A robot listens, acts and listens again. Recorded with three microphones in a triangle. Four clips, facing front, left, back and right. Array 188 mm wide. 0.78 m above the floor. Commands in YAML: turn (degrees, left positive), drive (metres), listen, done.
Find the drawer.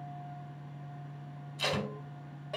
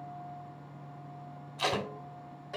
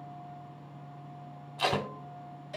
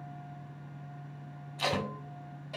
listen: true
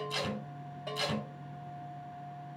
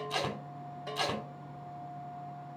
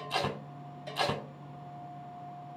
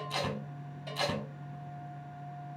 listen: true
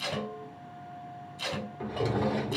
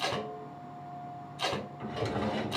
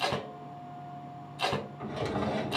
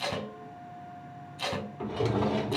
turn: -55
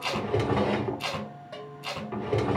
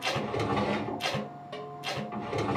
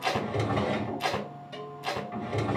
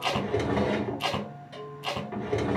turn: -20
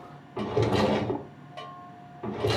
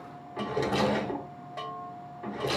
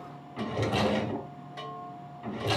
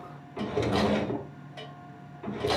done: "Facing the drawer, under 1 m away."